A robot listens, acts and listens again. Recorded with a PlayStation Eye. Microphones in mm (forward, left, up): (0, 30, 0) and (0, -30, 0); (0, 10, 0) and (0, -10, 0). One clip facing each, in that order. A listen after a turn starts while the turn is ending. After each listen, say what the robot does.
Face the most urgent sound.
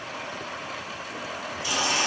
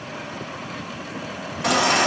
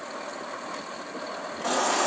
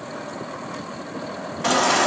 Turn 65° right.
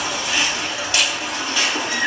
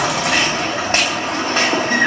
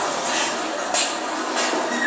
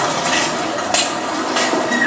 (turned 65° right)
Turn 45° right.
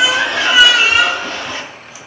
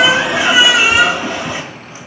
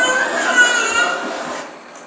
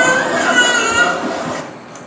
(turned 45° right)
Turn 15° right.
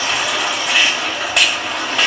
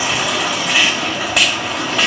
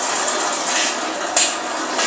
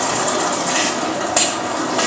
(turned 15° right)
Facing the baby crying, 1 to 2 m away.